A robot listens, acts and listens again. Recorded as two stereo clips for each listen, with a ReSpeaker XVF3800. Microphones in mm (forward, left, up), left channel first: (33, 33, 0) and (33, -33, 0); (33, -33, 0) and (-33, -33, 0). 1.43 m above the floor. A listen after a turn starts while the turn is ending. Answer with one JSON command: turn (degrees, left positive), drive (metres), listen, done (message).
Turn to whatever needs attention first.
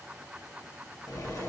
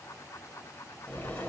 {"listen": true}
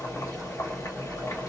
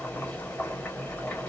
{"listen": true}
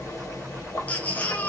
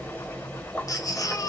{"turn": 25}
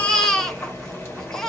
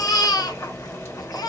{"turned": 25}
{"turn": 10}
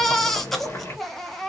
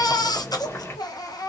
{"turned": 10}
{"done": "Found it: a baby crying, straight ahead, under 1 m away."}